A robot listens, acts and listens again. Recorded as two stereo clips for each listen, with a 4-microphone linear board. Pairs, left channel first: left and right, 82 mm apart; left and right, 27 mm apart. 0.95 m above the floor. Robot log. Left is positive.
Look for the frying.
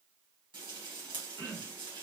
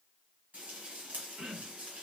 cmd yaw -90
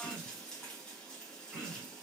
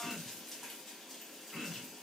note: So it is at 10° left.
cmd yaw +10
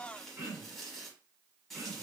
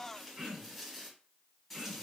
end: Facing the frying, 1 to 2 m away.